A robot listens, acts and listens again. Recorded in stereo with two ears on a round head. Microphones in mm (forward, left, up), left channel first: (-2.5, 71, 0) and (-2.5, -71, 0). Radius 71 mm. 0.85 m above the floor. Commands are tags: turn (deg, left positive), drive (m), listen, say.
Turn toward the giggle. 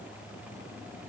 <listen/>
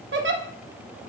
<turn deg="-90"/>
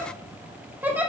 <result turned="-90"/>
<turn deg="-10"/>
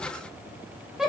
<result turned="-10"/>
<say>Found it: a giggle, straight ahead, under 1 m away.</say>